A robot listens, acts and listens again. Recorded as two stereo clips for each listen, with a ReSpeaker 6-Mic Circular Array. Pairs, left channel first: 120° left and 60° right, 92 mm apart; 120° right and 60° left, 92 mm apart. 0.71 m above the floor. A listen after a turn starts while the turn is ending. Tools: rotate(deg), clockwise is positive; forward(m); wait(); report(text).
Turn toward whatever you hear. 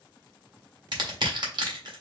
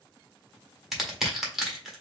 rotate(25)
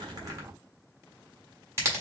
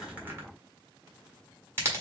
report("Facing the crushing.")